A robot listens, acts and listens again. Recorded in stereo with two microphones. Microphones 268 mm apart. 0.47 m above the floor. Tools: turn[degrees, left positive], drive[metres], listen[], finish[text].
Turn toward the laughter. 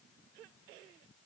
Action: listen[]
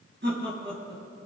Thought: The laughter: about 40° right or 140° right.
Action: turn[-40]
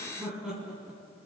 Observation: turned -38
Action: finish[Found it: laughter, straight ahead, 2 to 4 m away.]